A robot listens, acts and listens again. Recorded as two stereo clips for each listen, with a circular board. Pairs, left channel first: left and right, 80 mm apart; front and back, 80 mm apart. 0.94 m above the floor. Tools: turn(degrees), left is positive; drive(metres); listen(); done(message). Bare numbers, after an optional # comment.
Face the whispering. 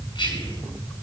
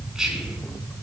# The whispering: 95° left.
turn(95)
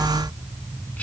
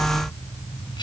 listen()
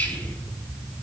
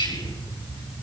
# The whispering is now 15° left.
turn(15)
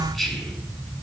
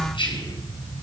done("Found it: whispering, straight ahead, over 4 m away.")